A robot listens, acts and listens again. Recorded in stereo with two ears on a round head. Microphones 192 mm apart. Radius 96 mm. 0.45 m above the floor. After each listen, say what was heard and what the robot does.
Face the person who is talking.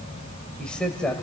Turn 30° left.
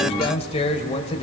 So it is at 145° left. Turn 145° left.
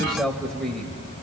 Found it: a man speaking, straight ahead.